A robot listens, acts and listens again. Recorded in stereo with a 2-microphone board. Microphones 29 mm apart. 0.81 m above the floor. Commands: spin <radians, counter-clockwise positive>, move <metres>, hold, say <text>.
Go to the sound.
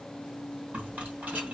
spin -1.13
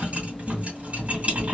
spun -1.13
spin -0.87
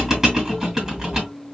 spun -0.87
spin -0.26
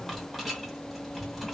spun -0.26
move 1.0
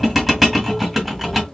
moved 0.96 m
move 1.0
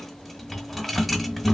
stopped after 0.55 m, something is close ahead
say I am next to the rattle.